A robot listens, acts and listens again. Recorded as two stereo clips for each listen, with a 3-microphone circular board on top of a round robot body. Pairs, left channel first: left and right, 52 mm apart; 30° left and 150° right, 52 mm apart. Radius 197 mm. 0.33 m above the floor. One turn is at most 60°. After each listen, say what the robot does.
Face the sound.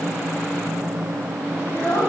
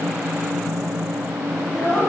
Turn 60° left.
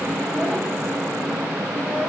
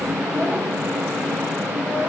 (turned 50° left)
Turn 30° left.
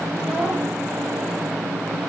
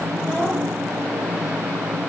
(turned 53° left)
Turn 25° right.
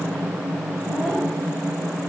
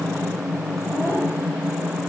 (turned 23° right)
I heard a child speaking from this way, but can't make it out now.